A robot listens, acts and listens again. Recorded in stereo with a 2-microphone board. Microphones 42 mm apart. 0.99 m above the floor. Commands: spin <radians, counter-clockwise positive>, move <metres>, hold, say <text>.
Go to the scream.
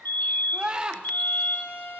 spin -0.44
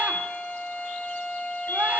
hold
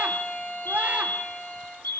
hold
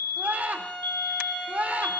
spin -2.27
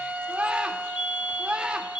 spin -0.52
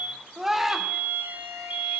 spin -0.17
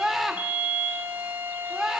move 1.0
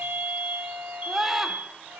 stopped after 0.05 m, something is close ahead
say Blocked. The scream is further on, straight ahead.